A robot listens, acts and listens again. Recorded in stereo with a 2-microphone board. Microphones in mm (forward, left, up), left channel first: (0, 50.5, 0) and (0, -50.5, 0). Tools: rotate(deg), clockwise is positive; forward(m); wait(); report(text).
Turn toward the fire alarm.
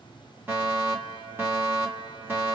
rotate(20)
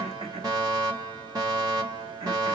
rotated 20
rotate(135)
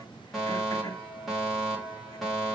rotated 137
report("Found it: a fire alarm, straight ahead, 2 to 4 m away.")